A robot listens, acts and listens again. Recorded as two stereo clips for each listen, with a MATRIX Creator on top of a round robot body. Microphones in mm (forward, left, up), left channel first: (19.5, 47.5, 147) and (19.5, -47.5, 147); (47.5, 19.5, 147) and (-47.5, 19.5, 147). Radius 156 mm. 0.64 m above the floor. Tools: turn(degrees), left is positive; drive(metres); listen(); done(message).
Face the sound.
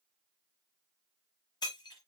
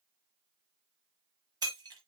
turn(degrees=135)
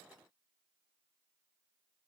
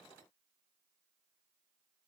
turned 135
done("Facing where the breaking glass came from. I can't hear it now.")